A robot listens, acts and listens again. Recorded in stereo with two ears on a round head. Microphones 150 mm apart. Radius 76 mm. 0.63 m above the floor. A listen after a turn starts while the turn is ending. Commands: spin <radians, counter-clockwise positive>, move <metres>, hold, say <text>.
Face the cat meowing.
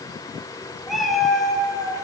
spin 0.52
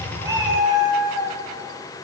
spin -0.35
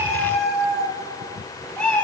say Facing the cat meowing, over 4 m away.